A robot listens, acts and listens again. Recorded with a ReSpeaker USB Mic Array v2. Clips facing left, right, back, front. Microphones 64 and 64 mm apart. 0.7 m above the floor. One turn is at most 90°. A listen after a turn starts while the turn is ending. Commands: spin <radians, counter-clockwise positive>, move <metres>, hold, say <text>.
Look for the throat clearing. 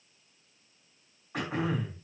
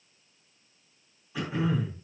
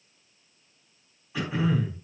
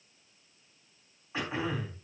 spin 0.96
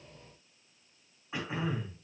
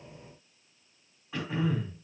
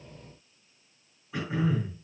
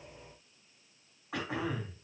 spin 0.35
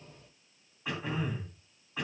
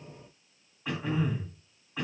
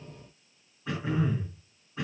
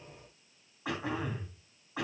say Found it: throat clearing, straight ahead, 2 to 4 m away.